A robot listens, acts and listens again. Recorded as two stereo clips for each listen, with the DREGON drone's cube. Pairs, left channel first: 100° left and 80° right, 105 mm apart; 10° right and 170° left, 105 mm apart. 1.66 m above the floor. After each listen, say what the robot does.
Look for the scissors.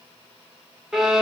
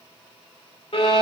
Keep listening.
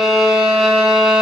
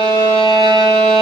Keep listening.
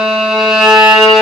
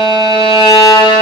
I can't make out scissors, only a violin.